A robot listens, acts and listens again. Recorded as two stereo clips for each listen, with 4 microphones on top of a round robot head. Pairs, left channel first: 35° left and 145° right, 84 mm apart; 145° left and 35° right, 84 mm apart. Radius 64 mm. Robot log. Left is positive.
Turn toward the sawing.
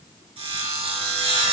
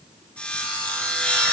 note: The sawing: 140° right.
cmd yaw -140
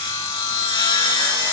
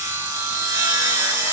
note: The sawing is now 10° left.
cmd yaw +10
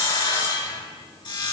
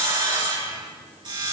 end: Facing the sawing, over 4 m away.